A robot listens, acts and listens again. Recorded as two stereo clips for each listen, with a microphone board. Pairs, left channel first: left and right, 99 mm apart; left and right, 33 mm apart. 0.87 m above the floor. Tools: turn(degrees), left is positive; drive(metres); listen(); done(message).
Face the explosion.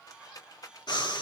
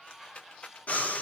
listen()
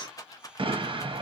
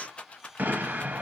turn(degrees=-65)
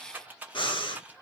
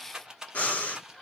listen()
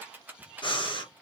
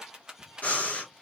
done("I heard an explosion, but can't make it out now. It was about straight ahead or 50° right.")